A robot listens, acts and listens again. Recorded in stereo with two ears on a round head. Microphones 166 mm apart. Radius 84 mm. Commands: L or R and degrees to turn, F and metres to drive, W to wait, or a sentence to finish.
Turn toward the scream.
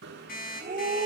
R40
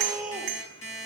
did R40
Found it: a scream, straight ahead.